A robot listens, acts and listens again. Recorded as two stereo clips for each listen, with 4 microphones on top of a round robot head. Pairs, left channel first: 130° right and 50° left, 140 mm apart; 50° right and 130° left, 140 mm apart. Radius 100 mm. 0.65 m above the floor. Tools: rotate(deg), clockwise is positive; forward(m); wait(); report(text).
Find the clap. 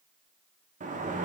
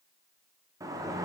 wait()
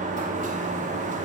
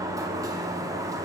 wait()
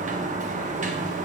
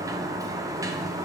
report("I can't make out a clap to turn to.")